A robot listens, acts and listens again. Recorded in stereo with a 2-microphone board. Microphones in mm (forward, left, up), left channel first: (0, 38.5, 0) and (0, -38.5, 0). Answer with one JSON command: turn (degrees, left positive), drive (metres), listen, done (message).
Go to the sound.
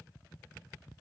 {"listen": true}
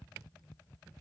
{"listen": true}
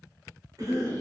{"turn": -50}
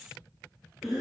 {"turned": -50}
{"drive": 1.0}
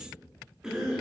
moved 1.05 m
{"turn": -10}
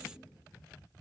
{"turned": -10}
{"listen": true}
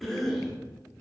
{"drive": 1.0}
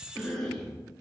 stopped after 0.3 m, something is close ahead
{"turn": 10}
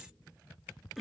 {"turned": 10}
{"done": "I am next to the cough."}